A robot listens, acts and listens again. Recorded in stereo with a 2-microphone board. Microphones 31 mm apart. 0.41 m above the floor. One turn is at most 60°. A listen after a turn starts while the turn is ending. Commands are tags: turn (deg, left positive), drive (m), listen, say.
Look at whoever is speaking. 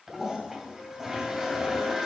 <listen/>
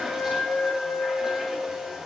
<listen/>
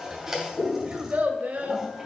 <turn deg="-55"/>
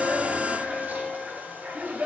<turn deg="-55"/>
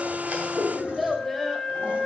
<say>Found it: a child speaking, straight ahead.</say>